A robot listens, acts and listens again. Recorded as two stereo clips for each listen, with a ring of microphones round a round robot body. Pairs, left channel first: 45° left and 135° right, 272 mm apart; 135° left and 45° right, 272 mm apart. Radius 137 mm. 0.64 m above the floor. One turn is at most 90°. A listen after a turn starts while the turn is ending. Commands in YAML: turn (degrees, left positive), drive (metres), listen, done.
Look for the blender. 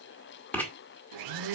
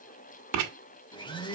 turn: -90
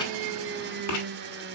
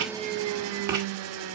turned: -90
turn: -80
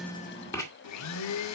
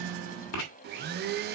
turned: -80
turn: 10
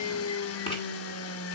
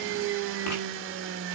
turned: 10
done: "Found it: a blender, straight ahead, under 1 m away."